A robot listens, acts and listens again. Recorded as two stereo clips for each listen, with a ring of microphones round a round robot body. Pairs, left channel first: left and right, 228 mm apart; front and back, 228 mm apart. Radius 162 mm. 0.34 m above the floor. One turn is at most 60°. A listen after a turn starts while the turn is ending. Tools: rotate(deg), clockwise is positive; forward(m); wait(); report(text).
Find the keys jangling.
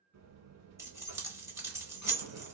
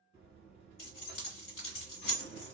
rotate(15)
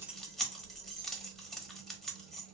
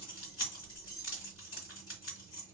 report("Facing the keys jangling, 1 to 2 m away.")